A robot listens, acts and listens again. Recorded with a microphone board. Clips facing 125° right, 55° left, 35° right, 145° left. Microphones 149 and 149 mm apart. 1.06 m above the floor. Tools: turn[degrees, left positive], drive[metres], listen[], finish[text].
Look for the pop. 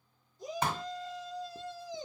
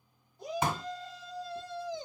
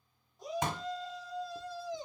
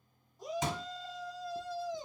Thought: The pop: 25° right.
Action: turn[-25]
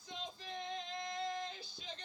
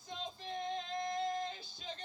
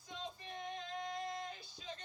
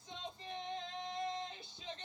Action: finish[I heard a pop from this way, but can't make it out now.]